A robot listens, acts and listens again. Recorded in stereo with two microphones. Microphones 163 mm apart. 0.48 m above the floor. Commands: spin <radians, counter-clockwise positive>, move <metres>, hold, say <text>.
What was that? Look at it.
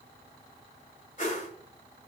spin 0.96
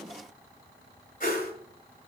spin 1.13
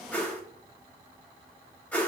spin 0.17
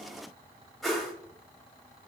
say Facing the whoosh.